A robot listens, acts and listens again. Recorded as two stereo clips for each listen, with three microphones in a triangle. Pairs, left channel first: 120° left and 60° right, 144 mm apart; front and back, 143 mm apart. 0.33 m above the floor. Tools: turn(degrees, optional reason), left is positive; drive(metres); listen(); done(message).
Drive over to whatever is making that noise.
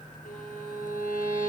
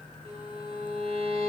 turn(degrees=135, reason="The violin: 135° left.")
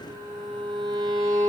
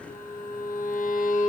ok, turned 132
drive(metres=1.0)
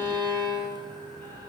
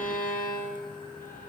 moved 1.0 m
drive(metres=1.0)
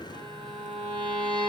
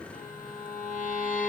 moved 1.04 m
drive(metres=1.0)
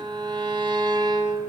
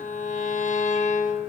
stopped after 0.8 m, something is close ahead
done("I am next to the violin.")